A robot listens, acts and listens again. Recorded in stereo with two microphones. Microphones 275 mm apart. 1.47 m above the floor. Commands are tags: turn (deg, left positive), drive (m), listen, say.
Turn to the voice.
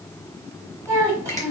<turn deg="-30"/>
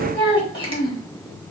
<turn deg="20"/>
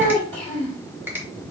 <say>Facing the child speaking, 2 to 4 m away.</say>